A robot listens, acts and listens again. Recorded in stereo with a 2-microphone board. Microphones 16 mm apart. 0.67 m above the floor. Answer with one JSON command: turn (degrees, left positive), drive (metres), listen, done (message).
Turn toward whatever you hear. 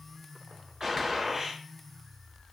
{"turn": -25}
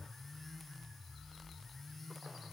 {"listen": true}
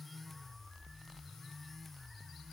{"done": "I heard a gunshot, but can't make it out now. It was about straight ahead or 130° right."}